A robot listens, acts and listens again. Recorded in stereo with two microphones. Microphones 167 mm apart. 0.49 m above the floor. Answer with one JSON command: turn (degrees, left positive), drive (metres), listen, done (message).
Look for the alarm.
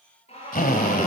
{"turn": 40}
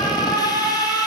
{"done": "Facing the alarm, over 4 m away."}